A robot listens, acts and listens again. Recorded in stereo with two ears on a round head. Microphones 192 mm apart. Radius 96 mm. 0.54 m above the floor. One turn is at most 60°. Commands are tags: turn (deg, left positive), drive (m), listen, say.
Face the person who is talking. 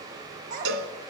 <turn deg="-40"/>
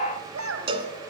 <turn deg="-60"/>
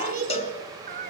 <turn deg="-45"/>
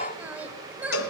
<turn deg="-10"/>
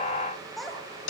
<say>Facing the child speaking, 2 to 4 m away.</say>